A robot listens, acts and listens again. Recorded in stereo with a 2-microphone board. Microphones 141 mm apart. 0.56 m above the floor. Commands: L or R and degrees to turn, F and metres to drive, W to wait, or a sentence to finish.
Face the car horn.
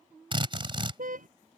R70
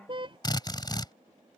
R40
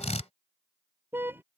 R15
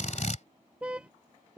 R10
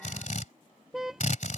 Facing the car horn.